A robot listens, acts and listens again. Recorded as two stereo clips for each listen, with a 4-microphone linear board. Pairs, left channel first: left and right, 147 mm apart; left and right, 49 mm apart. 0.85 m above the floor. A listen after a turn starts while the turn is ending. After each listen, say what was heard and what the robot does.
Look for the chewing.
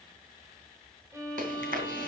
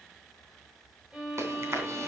The chewing: about 75° right or 105° right. Turn 75° right.
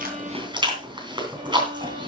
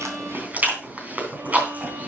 So it is at 30° right. Turn 30° right.
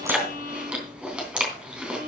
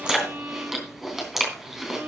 Facing the chewing.